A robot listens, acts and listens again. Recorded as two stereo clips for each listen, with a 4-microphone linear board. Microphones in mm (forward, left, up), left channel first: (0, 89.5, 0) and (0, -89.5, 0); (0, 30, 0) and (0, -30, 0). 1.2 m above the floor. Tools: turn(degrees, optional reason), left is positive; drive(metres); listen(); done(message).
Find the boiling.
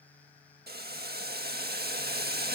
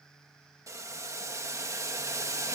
turn(degrees=-60, reason="The boiling: about 60° right or 120° right.")
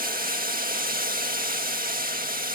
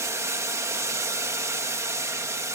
turn(degrees=-55, reason="So it is at 55° right.")
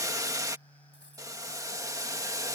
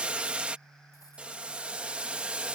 turn(degrees=-20, reason="The boiling is now 20° right.")
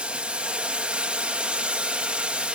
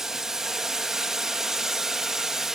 done("Found it: boiling, straight ahead.")